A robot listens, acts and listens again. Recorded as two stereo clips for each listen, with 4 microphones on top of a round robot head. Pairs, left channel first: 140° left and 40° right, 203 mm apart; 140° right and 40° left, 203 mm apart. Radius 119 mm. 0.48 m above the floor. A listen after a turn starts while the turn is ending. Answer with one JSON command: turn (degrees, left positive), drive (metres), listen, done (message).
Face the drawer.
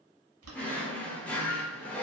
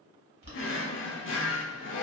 {"turn": -135}
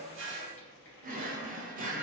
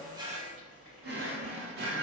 {"done": "Facing the drawer, under 1 m away."}